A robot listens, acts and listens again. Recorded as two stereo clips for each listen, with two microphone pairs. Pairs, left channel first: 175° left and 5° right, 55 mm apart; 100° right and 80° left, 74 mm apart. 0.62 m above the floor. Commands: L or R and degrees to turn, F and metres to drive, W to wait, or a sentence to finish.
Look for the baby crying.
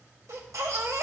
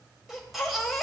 R10
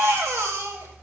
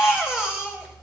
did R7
Found it: a baby crying, straight ahead, 1 to 2 m away.